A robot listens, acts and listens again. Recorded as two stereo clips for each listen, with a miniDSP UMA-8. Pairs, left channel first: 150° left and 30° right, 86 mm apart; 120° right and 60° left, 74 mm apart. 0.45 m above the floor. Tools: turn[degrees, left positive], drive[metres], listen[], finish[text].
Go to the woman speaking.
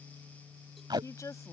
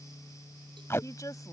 Thought: The woman speaking: 160° right.
Action: turn[-160]
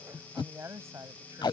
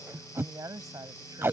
Thought: The woman speaking is now 25° left.
Action: turn[25]
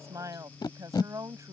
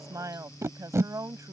Thought: The woman speaking is now 20° left.
Action: turn[20]
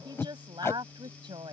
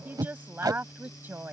Action: drive[1.0]
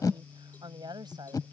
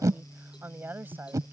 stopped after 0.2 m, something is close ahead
Action: finish[Something is in my way. I am facing the woman speaking but have not reached it.]